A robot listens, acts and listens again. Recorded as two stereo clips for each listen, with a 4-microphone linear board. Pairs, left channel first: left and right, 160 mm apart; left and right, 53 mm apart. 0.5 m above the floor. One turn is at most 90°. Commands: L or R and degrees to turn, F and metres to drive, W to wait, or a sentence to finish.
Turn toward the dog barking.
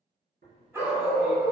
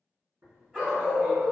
R25
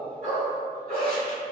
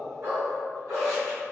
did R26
R90
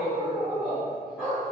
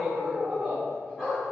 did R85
Facing the dog barking, 1 to 2 m away.